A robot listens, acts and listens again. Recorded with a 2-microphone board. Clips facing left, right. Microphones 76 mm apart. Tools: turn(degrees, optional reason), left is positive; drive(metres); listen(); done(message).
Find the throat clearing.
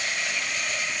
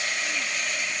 listen()
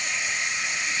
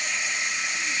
listen()
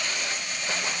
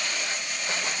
done("I can't make out throat clearing to turn to.")